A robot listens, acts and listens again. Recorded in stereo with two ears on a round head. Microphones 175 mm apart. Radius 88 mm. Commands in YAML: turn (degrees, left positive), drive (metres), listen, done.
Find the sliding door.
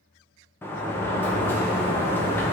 turn: 30
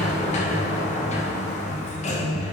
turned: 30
turn: 140
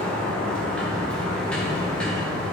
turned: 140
done: "Found it: a sliding door, straight ahead, 1 to 2 m away."